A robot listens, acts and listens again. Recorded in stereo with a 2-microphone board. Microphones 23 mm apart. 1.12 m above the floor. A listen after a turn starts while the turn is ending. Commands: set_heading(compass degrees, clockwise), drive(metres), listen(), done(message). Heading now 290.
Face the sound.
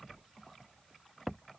listen()
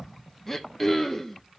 set_heading(275)
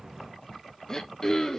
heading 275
set_heading(125)
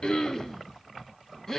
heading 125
set_heading(100)
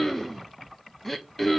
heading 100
set_heading(90)
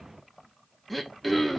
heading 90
done("Found it: throat clearing, straight ahead, 1 to 2 m away.")